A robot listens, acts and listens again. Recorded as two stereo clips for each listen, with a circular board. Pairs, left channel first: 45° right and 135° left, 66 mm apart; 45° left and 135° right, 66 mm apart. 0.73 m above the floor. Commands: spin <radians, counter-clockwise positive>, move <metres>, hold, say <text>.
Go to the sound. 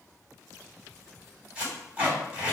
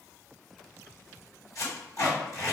spin 1.05
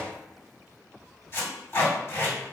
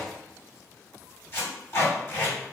move 1.0
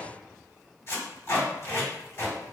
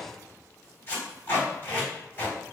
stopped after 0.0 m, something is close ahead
say Something is in my way. I am facing the tape being pulled but have not reached it.